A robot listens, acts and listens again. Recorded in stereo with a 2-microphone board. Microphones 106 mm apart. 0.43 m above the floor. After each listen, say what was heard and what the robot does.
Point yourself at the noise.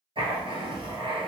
The writing: about 55° right or 125° right. Turn 55° right.
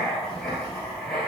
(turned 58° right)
Found it: writing, straight ahead.